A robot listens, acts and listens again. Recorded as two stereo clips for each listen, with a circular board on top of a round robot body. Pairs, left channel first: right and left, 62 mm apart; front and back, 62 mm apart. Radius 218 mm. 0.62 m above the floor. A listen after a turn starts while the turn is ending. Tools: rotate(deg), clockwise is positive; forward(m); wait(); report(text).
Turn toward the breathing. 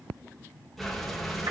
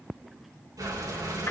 rotate(-180)
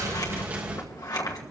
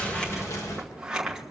rotate(-25)
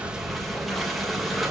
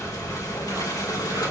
report("Found it: breathing, straight ahead.")